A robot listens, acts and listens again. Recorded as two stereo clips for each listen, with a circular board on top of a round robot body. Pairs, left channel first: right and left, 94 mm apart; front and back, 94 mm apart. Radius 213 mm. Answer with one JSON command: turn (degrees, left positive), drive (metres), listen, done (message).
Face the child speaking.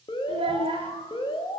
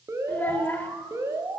{"turn": 65}
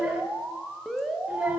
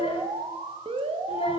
{"done": "Found it: a child speaking, straight ahead, 1 to 2 m away."}